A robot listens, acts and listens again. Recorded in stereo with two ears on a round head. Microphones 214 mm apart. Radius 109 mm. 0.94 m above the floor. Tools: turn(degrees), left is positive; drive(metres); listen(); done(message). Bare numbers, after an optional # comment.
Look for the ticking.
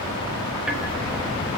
turn(-30)
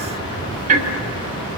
# So it is at 145° right.
turn(-145)
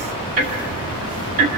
# The ticking is now 35° right.
turn(-35)
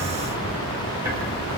# The ticking is now 10° right.
turn(-10)
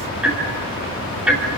done("Found it: ticking, straight ahead.")